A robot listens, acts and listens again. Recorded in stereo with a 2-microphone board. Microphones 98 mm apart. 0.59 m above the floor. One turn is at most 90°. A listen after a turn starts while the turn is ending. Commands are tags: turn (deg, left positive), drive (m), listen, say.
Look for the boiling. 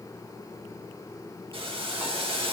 <turn deg="-65"/>
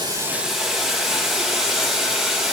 <say>Facing the boiling, 2 to 4 m away.</say>